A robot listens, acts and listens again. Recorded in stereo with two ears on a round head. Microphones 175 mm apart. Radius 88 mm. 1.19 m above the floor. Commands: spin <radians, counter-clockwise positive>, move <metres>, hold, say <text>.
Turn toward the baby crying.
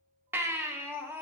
spin -0.52
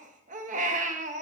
spin -2.44
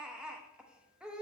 say Found it: a baby crying, straight ahead.